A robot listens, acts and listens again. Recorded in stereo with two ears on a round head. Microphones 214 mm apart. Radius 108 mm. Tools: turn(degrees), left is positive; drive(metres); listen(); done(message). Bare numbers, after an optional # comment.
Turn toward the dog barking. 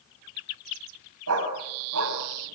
# The dog barking: about 60° right or 120° right.
turn(-60)
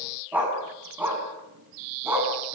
# So it is at 10° right.
turn(-10)
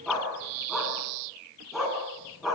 done("Found it: a dog barking, straight ahead, over 4 m away.")